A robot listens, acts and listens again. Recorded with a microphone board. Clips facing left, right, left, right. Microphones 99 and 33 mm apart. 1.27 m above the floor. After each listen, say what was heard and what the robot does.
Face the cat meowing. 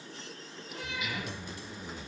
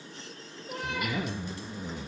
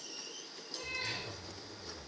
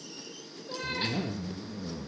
Keep listening.
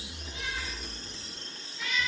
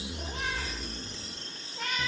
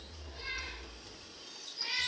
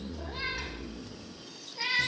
The cat meowing: about 55° right or 125° right. Turn 55° right.
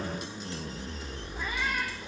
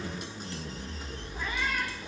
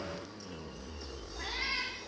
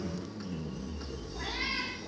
Keep listening.
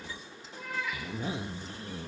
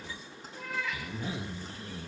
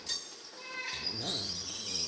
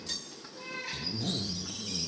Found it: a cat meowing, straight ahead, over 4 m away.